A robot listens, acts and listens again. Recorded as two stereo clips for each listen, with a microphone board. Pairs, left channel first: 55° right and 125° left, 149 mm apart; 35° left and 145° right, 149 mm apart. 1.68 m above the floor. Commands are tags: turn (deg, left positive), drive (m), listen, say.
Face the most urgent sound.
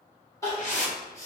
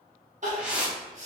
<turn deg="-125"/>
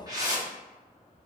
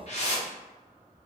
<listen/>
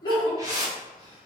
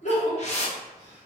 <say>Facing the crying, 1 to 2 m away.</say>